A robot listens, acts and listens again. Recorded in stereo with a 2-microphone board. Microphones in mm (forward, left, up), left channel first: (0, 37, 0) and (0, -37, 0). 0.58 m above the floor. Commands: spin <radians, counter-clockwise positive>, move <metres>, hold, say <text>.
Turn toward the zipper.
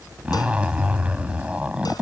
spin -0.26
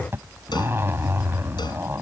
spin -2.62
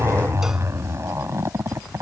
spin -0.70
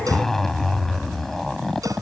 say Found it: a zipper, straight ahead.